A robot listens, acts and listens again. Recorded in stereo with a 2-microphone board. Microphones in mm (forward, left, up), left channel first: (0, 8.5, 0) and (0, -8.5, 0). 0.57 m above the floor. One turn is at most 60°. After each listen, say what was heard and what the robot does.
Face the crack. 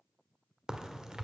The crack: about 50° right or 130° right. Turn 50° right.
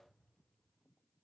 Keep listening.
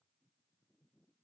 I heard a crack, but can't make it out now. It was about straight ahead or 80° right.